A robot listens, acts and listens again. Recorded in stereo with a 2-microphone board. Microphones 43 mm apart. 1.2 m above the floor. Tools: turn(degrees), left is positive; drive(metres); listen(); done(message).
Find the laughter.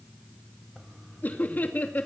turn(degrees=40)
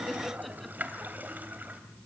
listen()
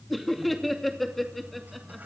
done("Found it: laughter, straight ahead.")